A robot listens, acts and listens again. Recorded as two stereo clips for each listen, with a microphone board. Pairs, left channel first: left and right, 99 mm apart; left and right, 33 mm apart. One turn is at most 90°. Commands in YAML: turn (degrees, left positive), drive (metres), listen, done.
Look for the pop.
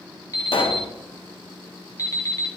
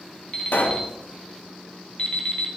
turn: 75
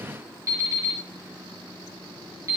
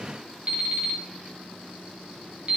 listen: true
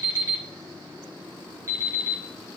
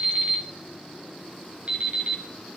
done: "I heard a pop, but can't make it out now. It was about straight ahead or 30° left."